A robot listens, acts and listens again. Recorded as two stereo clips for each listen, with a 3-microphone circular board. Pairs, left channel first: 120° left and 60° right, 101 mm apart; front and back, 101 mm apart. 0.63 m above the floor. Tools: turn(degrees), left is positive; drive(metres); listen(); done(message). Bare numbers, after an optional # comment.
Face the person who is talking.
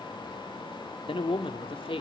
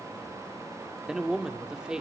# The man speaking: 100° left.
turn(100)
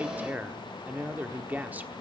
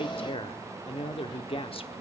# The man speaking is now 15° left.
turn(15)
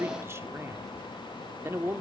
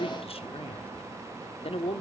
done("Found it: a man speaking, straight ahead.")